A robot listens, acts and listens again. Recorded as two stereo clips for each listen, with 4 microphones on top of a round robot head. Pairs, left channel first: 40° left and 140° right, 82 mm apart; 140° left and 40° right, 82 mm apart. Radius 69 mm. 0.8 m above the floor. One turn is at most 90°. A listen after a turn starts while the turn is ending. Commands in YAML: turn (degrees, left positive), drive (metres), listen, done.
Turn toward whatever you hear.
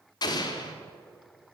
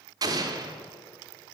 done: "Found it: an explosion, straight ahead, under 1 m away."